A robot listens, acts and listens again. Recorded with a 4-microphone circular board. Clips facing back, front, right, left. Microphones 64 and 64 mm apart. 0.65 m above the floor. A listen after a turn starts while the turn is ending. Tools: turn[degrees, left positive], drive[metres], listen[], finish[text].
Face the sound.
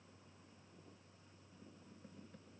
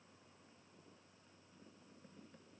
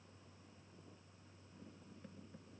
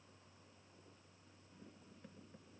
Action: listen[]
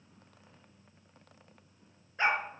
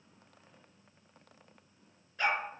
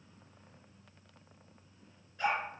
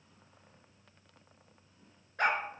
Thought: The dog barking: 115° left.
Action: turn[115]
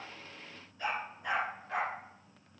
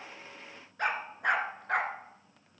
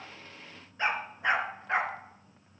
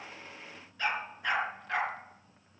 Thought: The dog barking is now 25° right.
Action: turn[-25]
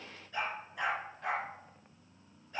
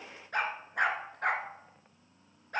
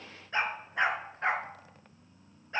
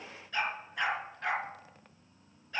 Thought: The dog barking is now 30° right.
Action: turn[-30]
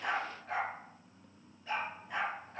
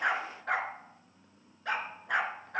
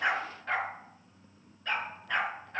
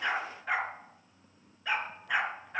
Thought: The dog barking is now 10° left.
Action: turn[10]
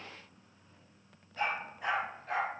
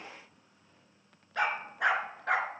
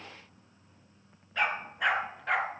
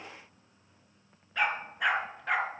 Action: finish[Facing the dog barking.]